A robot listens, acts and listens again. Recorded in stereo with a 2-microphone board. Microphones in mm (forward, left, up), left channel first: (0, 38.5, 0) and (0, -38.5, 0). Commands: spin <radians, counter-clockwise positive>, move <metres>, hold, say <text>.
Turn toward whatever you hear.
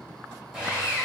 spin -0.52
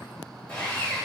spin 0.35
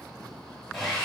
say Found it: sawing, straight ahead.